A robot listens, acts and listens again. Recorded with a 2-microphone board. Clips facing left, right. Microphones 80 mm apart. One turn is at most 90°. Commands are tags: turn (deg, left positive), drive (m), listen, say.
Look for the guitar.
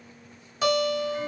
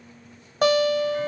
<turn deg="-55"/>
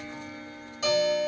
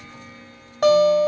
<turn deg="-65"/>
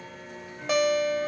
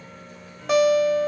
<say>Facing the guitar.</say>